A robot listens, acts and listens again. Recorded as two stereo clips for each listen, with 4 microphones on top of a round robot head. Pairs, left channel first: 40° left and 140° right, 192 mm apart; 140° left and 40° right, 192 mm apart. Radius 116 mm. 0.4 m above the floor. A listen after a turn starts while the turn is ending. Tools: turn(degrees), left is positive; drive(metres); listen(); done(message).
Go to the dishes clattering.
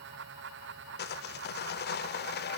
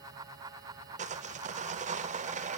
listen()
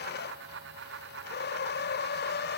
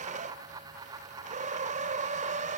listen()
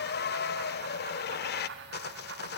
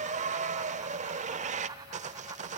done("I can't make out dishes clattering to turn to.")